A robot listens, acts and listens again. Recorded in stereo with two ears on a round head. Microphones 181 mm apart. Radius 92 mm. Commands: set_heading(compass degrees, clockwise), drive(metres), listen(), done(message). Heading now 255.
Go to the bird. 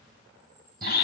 set_heading(275)
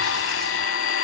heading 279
listen()
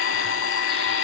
listen()
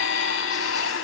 done("I heard a bird, but can't make it out now. It was about straight ahead or 135° right. I did not reach it.")